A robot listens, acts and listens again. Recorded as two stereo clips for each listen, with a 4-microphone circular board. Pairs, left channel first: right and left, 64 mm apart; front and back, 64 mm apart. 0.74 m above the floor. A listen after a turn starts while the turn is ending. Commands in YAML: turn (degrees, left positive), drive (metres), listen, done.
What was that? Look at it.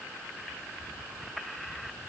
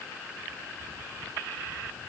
listen: true
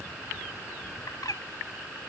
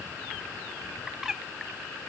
turn: -100
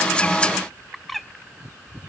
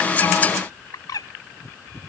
done: "Found it: a bird, straight ahead."